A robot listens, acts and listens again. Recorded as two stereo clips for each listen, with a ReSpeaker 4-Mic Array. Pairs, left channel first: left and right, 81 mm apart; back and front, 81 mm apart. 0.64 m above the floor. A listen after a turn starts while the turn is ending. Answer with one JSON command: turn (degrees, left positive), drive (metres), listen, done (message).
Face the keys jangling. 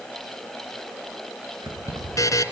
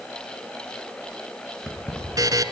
{"turn": -95}
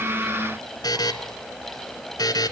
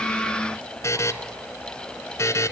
{"listen": true}
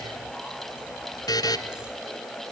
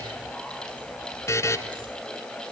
{"listen": true}
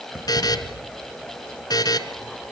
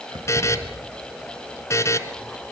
{"done": "Facing where the keys jangling came from. I can't hear it now."}